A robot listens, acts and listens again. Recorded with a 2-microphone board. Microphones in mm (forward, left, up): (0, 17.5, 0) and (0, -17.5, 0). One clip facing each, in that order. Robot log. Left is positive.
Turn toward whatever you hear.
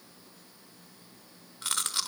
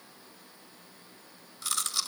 note: The chewing: about 45° left or 135° left.
cmd yaw +45
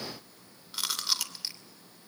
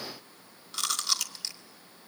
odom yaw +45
note: So it is at 10° left.
cmd yaw +10
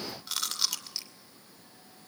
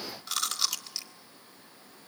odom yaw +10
end: Facing the chewing, 2 to 4 m away.